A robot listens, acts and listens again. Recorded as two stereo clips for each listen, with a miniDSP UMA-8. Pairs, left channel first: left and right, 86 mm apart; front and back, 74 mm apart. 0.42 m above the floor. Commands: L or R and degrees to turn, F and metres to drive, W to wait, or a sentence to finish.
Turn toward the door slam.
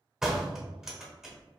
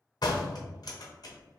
Found it: a door slam, straight ahead.